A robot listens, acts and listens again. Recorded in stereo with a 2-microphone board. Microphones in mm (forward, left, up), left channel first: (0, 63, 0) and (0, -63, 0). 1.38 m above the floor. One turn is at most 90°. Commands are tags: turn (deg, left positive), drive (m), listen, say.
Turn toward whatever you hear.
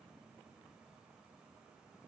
<listen/>
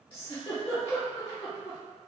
<turn deg="45"/>
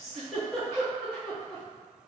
<say>Found it: a giggle, straight ahead, 1 to 2 m away.</say>